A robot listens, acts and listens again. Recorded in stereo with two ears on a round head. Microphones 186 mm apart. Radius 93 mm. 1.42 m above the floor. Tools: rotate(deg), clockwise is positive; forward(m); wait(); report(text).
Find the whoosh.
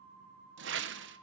rotate(60)
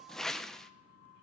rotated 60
report("Found it: a whoosh, straight ahead, 1 to 2 m away.")